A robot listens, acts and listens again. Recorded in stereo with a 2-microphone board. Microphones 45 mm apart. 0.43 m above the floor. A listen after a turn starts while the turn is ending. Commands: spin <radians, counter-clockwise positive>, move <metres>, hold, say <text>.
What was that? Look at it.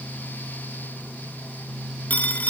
spin 0.70
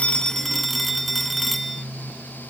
say Facing the phone ringing.